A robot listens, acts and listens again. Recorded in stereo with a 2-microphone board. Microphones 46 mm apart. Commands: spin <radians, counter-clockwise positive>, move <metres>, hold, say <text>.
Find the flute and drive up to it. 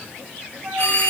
spin -0.87
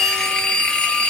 hold
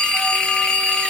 hold
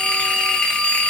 say I heard a flute, but can't make it out now. It was about straight ahead or 80° right. I did not reach it.